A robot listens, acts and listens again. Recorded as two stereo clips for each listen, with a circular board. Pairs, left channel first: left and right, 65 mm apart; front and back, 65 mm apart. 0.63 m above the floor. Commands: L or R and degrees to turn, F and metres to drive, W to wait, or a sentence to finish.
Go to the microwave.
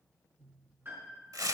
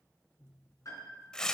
W
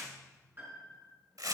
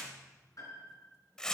W
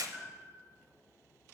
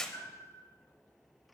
I can't make out a microwave, only tearing paper and a piano.